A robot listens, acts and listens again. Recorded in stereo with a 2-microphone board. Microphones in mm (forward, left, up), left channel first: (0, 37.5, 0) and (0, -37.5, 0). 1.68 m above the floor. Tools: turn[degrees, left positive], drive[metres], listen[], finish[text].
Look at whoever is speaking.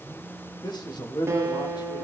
Action: turn[90]
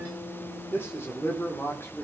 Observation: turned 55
Thought: So it is at 35° left.
Action: turn[35]
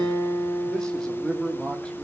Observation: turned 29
Thought: The man speaking is now 10° left.
Action: turn[10]
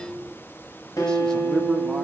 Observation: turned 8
Thought: The man speaking is now 10° left.
Action: turn[10]
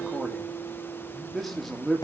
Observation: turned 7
Action: finish[Facing the man speaking, 2 to 4 m away.]